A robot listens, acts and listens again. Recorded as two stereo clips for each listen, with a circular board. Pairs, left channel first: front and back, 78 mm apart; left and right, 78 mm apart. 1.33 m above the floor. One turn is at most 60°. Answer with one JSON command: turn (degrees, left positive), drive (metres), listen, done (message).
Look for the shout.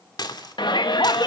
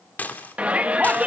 {"turn": -15}
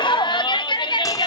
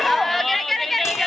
{"done": "Facing the shout."}